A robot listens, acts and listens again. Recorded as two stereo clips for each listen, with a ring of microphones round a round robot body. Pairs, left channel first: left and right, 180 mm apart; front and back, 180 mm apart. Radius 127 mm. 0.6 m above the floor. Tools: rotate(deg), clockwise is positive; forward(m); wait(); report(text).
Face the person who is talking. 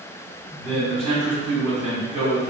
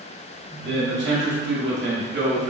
rotate(165)
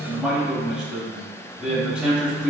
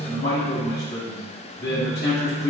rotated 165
report("Found it: a man speaking, straight ahead.")